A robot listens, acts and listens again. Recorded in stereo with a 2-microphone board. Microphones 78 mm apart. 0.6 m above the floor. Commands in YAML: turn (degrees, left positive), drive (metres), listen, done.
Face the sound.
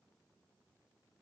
listen: true
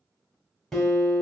turn: 30
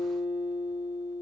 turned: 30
turn: -25
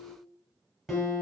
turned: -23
done: "Found it: a guitar, straight ahead, under 1 m away."